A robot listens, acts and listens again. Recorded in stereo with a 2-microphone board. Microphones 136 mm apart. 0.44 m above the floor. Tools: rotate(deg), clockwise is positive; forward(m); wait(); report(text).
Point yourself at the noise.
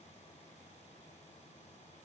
wait()
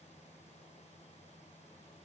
wait()
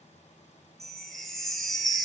rotate(-30)
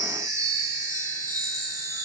rotate(25)
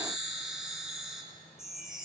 report("Found it: a chime, straight ahead.")